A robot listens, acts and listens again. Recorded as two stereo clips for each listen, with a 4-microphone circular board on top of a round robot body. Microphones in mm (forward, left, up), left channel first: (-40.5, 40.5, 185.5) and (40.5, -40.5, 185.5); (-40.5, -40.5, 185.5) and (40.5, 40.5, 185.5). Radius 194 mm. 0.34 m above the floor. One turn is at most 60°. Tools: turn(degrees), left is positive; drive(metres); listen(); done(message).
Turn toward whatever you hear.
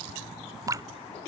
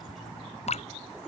turn(degrees=-60)
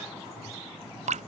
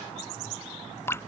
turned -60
turn(degrees=-60)
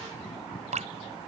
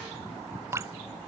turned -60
turn(degrees=-25)
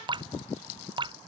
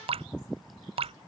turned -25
done("Found it: dripping, straight ahead.")